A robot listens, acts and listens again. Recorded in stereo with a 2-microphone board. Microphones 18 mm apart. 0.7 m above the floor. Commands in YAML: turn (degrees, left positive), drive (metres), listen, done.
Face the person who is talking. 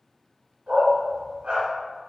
listen: true
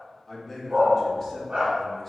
turn: 30
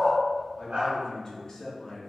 turn: 135
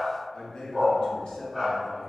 turn: 60
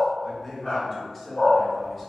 turn: 10
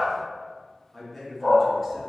done: "Found it: a man speaking, straight ahead."